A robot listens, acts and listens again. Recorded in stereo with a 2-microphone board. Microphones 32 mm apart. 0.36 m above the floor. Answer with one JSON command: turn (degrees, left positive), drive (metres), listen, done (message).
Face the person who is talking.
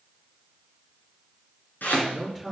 {"turn": 30}
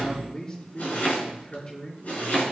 {"turn": 140}
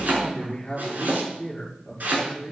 {"turn": 20}
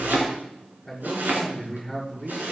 {"done": "Facing the man speaking, over 4 m away."}